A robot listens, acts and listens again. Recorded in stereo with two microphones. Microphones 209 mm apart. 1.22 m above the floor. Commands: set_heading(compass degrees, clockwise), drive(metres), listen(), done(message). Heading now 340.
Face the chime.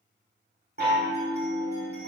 set_heading(30)
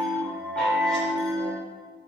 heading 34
done("Found it: a chime, straight ahead, 2 to 4 m away.")